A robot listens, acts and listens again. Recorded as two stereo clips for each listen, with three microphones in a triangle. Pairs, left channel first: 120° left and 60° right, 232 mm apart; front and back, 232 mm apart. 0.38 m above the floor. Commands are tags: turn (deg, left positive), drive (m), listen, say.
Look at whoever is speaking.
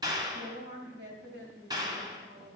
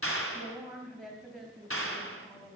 <turn deg="-90"/>
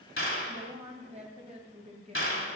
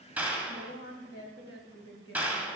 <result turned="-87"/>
<say>Found it: a woman speaking, straight ahead.</say>